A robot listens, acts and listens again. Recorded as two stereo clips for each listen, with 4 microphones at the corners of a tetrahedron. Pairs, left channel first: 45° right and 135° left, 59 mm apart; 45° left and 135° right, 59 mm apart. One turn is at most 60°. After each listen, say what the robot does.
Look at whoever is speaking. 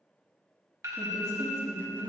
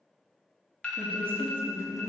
Turn 60° left.
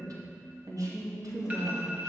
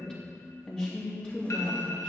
Turn 60° left.
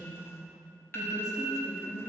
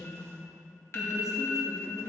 Turn 55° left.
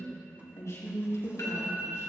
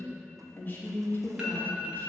Turn 15° right.
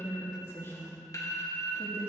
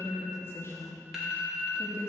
Facing the woman speaking, 2 to 4 m away.